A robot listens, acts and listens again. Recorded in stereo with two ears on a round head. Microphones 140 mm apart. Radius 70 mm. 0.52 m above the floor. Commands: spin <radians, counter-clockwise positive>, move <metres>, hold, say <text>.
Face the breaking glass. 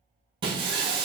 spin -0.52
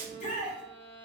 spin -1.92
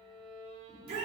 say I heard breaking glass from this way, but can't make it out now.